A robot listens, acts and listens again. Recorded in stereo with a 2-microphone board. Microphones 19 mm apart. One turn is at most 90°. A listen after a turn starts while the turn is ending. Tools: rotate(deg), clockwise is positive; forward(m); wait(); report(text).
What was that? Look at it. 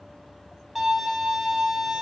rotate(30)
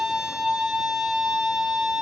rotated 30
rotate(90)
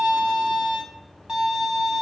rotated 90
rotate(40)
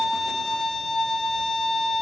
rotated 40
rotate(-15)
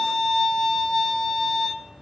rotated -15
report("Found it: a violin, straight ahead.")